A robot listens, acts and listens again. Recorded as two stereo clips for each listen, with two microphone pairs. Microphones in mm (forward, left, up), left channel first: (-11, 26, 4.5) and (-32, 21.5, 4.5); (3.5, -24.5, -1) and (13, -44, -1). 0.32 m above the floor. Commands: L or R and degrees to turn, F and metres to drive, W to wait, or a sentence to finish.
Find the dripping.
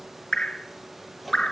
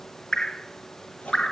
L60
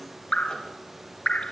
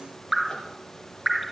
L20
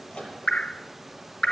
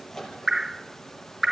Facing the dripping.